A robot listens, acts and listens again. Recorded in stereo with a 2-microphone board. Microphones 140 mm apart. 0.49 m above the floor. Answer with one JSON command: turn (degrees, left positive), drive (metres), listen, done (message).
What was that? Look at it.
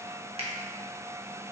{"turn": -45}
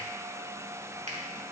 {"listen": true}
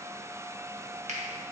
{"turn": -75}
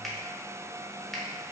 {"done": "Found it: a finger snap, straight ahead, under 1 m away."}